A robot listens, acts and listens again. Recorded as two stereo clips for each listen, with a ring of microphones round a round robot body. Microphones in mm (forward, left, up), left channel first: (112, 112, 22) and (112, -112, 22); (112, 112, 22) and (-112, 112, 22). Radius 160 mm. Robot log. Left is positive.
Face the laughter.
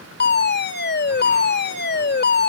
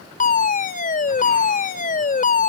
cmd idle
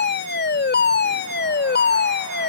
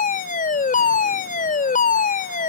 cmd idle
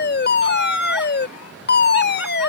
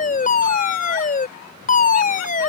end: Found it: laughter, straight ahead.